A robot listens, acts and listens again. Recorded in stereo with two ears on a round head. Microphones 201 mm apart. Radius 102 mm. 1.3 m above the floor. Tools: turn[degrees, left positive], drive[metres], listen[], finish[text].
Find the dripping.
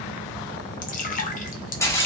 Thought: The dripping: about 35° left or 145° left.
Action: turn[35]
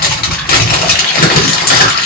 Action: listen[]
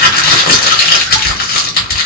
Action: listen[]
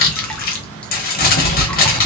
Action: finish[I heard dripping, but can't make it out now. It was about straight ahead or 110° left.]